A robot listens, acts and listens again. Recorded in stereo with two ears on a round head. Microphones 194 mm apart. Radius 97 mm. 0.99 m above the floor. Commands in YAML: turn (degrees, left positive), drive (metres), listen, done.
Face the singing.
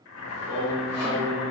turn: -65
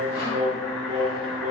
turn: -80
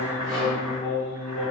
turn: -30
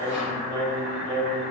done: "Facing the singing."